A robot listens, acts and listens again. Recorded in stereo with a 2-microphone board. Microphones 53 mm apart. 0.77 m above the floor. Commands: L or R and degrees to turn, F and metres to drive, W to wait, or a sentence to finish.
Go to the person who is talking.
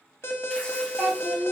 R25
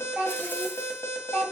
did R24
F1.0
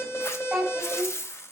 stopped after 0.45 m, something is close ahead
R10
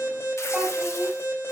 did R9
W
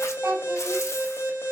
W
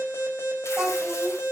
Blocked. The child speaking is further on, straight ahead.